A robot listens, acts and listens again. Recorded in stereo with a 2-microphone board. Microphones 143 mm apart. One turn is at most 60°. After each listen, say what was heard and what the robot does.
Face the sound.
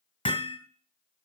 The hammering: about 35° left or 145° left. Turn 35° left.
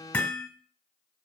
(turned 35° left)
Facing the hammering, 1 to 2 m away.